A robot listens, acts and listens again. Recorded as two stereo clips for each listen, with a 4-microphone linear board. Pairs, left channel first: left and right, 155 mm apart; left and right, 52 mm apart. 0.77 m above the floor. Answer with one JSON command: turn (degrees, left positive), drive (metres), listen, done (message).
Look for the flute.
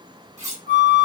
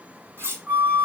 {"turn": -45}
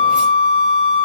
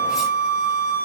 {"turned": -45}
{"turn": -90}
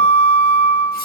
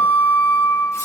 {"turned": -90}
{"done": "Facing the flute."}